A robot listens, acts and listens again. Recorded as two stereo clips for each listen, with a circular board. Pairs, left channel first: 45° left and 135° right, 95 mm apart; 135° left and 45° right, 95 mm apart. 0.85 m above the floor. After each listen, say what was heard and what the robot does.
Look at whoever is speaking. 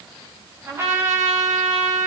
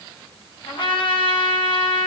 Keep listening.
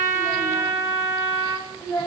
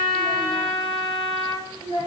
The child speaking: 100° left. Turn 100° left.
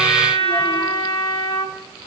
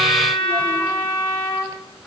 Keep listening.
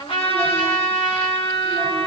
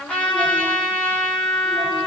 Keep listening.
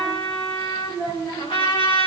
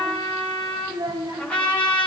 Facing the child speaking.